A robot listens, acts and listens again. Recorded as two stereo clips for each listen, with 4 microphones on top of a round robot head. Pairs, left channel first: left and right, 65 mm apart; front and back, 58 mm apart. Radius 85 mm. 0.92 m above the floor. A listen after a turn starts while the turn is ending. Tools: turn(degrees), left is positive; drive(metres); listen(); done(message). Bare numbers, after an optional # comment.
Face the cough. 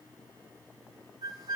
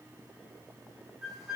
listen()
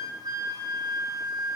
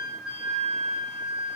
listen()
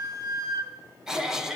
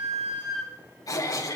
# The cough: 10° right.
turn(-10)
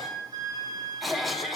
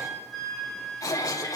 done("Found it: a cough, straight ahead, 2 to 4 m away.")